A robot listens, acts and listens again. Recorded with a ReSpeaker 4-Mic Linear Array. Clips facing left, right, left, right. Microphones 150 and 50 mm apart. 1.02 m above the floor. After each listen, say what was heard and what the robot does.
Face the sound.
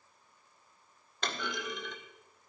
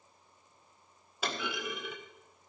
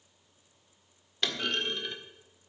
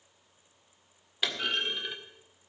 Turn 30° right.
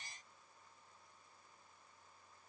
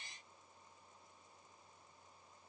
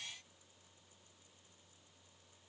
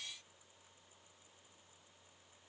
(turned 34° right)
Keep listening.
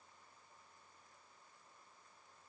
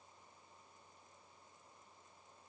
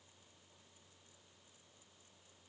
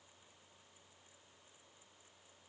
I heard a clunk, but can't make it out now. It was about 25° left or 140° right.